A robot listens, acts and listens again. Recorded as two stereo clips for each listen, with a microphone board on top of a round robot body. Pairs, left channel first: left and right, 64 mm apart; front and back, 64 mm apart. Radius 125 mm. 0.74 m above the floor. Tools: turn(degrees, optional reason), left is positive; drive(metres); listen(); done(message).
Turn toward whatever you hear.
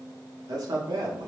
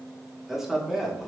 turn(degrees=-90, reason="The man speaking: 90° right.")
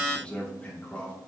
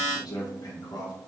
turn(degrees=20, reason="The man speaking is now 20° left.")
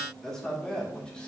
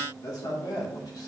turn(degrees=10, reason="The man speaking is now 10° left.")
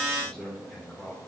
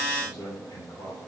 turn(degrees=10, reason="The man speaking is now 10° left.")
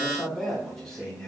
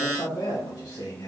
turn(degrees=10, reason="The man speaking is now 10° left.")
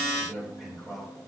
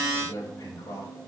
done("Found it: a man speaking, straight ahead, 2 to 4 m away.")